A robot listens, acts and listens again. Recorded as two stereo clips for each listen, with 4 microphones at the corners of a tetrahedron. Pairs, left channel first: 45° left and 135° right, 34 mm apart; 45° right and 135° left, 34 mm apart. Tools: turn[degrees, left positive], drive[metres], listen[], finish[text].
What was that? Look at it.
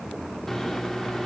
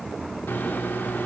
Thought: The microwave: 35° right.
Action: turn[-35]
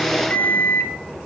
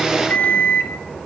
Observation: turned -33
Action: finish[Found it: a microwave, straight ahead.]